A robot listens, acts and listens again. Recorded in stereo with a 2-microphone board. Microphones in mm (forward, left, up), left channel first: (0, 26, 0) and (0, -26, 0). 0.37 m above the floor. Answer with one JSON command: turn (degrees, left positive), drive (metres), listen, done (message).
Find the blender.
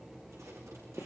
{"listen": true}
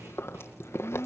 {"turn": 65}
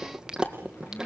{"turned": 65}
{"listen": true}
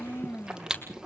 {"turn": 50}
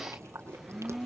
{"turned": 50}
{"done": "Facing the blender, 1 to 2 m away."}